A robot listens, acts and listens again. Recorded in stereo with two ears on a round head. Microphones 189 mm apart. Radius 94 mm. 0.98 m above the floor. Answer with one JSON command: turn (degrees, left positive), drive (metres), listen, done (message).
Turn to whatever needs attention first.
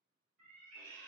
{"listen": true}
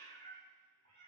{"listen": true}
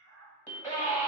{"turn": 30}
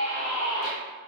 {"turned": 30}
{"turn": 140}
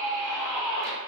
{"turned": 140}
{"turn": 10}
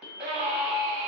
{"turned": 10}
{"done": "Facing the scream, under 1 m away."}